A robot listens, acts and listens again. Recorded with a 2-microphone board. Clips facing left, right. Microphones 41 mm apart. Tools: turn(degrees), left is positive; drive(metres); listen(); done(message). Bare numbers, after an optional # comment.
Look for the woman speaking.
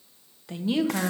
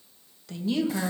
# The woman speaking: about 15° left or 165° left.
turn(15)
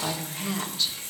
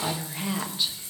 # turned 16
# So it is at 15° right.
turn(-15)
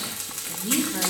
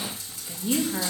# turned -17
# The woman speaking is now 10° right.
turn(-10)
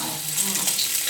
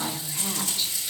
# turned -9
listen()
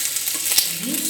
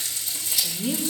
# The woman speaking is now 15° right.
turn(-15)
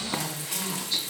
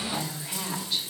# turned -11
# The woman speaking is now 10° right.
turn(-10)
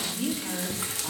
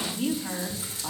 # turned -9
done("Found it: a woman speaking, straight ahead.")